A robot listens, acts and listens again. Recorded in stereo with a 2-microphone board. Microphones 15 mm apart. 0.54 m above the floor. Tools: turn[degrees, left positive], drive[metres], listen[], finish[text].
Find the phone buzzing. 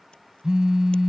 Thought: The phone buzzing: about 50° right or 130° right.
Action: turn[-50]
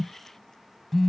Action: finish[Found it: a phone buzzing, straight ahead.]